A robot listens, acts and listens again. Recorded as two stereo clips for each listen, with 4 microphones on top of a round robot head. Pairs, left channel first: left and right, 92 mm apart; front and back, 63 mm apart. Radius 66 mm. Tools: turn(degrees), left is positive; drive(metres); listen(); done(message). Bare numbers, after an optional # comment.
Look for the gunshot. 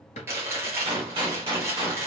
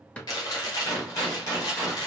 # The gunshot: 55° right.
turn(-55)
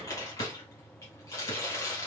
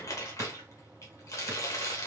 done("Facing where the gunshot came from. I can't hear it now.")